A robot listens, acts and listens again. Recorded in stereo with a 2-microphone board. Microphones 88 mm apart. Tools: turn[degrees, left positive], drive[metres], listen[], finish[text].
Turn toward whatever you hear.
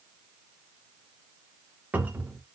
Thought: The cupboard door: about 20° right or 160° right.
Action: turn[-20]
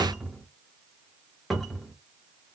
Action: finish[Found it: a cupboard door, straight ahead.]